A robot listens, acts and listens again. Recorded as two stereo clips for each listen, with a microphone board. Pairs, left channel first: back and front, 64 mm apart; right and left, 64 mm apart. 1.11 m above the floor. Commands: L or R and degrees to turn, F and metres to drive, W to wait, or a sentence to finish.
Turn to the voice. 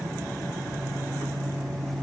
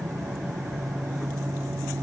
W
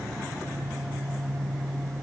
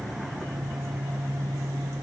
W
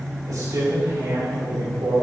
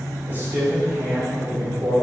L35
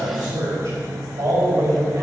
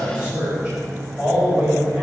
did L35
L15
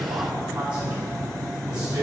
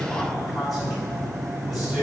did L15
Found it: a man speaking, straight ahead, over 4 m away.